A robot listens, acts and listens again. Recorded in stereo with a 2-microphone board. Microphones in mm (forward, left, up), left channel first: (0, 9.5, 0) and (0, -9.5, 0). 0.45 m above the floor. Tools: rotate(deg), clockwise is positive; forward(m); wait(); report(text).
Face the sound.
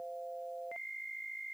wait()
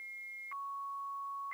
wait()
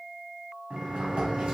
rotate(55)
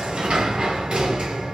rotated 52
rotate(70)
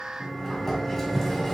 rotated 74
report("Facing the sliding door.")